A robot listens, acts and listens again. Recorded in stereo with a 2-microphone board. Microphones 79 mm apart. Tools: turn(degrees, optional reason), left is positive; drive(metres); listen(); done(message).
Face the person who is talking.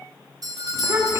turn(degrees=-40, reason="The child speaking: about 40° right or 140° right.")
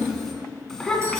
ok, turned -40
turn(degrees=10, reason="So it is at 10° left.")
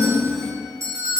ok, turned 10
done("Facing the child speaking, 2 to 4 m away.")